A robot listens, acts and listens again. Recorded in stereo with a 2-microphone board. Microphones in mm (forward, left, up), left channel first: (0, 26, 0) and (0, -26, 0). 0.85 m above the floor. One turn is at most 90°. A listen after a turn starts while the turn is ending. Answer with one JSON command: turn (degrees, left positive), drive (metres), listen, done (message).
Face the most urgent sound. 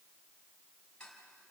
{"listen": true}
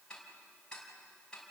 {"listen": true}
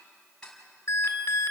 {"turn": 65}
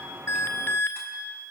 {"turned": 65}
{"turn": 45}
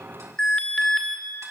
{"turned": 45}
{"turn": 20}
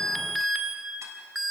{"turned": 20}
{"done": "Facing the alarm, 2 to 4 m away."}